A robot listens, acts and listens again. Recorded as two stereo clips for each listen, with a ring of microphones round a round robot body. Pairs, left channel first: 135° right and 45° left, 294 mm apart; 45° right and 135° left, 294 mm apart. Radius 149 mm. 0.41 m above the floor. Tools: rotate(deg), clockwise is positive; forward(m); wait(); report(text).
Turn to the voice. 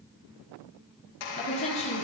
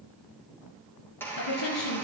rotate(65)
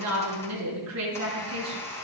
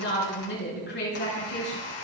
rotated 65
rotate(-10)
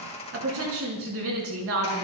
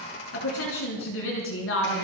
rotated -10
report("Found it: a woman speaking, straight ahead.")